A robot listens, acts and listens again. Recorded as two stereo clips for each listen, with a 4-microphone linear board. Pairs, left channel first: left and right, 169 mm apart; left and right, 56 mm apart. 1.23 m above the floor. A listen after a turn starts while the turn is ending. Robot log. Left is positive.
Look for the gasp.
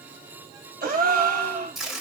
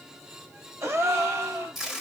note: The gasp: about 60° right or 120° right.
cmd yaw -60
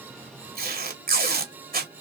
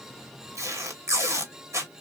cmd idle
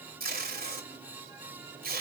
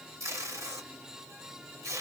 end: I heard a gasp, but can't make it out now. It was about straight ahead or 60° right.